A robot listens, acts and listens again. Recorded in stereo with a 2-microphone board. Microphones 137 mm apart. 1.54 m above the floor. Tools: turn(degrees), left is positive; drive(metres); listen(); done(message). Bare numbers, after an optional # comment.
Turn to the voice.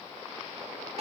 listen()
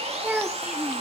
turn(-30)
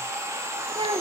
# So it is at 140° right.
turn(-140)
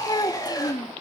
# The child speaking is now 35° left.
turn(35)
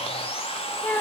# The child speaking is now 15° left.
turn(15)
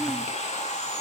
listen()
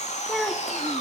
done("Found it: a child speaking, straight ahead.")